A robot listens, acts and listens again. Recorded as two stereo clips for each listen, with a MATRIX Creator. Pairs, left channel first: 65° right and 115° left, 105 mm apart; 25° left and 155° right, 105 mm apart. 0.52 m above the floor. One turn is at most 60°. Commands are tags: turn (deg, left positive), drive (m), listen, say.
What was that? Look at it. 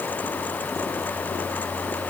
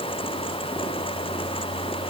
<listen/>
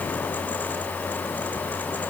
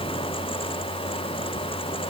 <listen/>
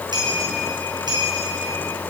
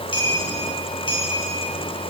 <turn deg="60"/>
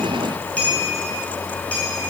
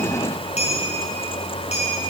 <turn deg="10"/>
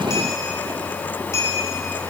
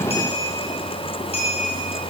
<say>Facing the clink, over 4 m away.</say>